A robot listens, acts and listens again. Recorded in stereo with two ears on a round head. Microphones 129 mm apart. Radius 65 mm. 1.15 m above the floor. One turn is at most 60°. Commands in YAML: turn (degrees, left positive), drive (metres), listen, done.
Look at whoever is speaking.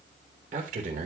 turn: -60
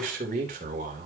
turn: -60
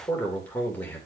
turn: 10
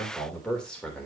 done: "Found it: a man speaking, straight ahead."